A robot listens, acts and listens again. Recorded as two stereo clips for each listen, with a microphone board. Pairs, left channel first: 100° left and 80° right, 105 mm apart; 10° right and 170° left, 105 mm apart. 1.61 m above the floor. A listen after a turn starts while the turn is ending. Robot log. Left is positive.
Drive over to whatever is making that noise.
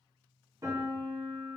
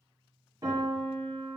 note: The piano: 135° right.
cmd yaw -135
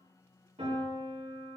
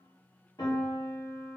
note: The piano is now 65° right.
cmd yaw -65
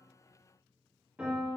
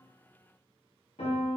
cmd fwd 1.0
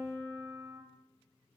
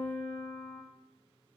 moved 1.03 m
cmd fwd 1.0
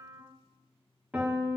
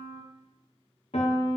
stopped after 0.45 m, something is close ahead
end: Arrived at the piano, straight ahead.